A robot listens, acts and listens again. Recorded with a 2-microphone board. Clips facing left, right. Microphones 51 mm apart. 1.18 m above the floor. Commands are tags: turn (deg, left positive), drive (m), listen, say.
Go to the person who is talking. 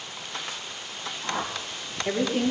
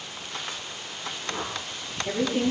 <turn deg="30"/>
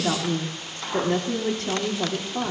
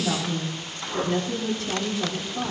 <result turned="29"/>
<turn deg="120"/>
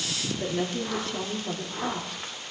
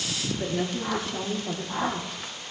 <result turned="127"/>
<drive m="1.0"/>
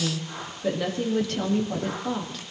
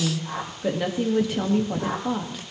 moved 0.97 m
<turn deg="-15"/>
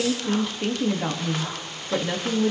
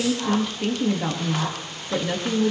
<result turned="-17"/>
<drive m="1.0"/>
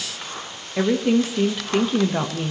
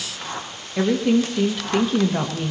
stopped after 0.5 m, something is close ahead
<turn deg="10"/>
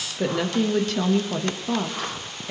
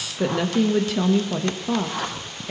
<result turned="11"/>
<say>Arrived at the woman speaking, straight ahead.</say>